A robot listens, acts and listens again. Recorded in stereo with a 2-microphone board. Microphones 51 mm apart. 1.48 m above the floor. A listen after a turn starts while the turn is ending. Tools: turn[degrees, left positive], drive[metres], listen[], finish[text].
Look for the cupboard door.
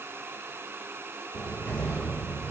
Thought: The cupboard door: about 50° left or 130° left.
Action: turn[50]
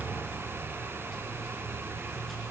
Action: finish[Found it: a cupboard door, straight ahead.]